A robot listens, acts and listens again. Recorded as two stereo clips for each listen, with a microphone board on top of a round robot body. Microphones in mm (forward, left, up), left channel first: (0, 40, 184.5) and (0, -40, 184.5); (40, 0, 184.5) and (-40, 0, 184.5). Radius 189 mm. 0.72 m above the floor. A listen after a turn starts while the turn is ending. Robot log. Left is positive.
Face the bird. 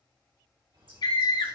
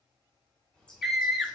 note: The bird: 80° right.
cmd yaw -80
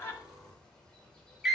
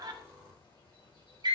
note: The bird is now 10° left.
cmd yaw +10
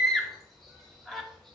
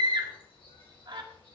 end: Facing the bird, 2 to 4 m away.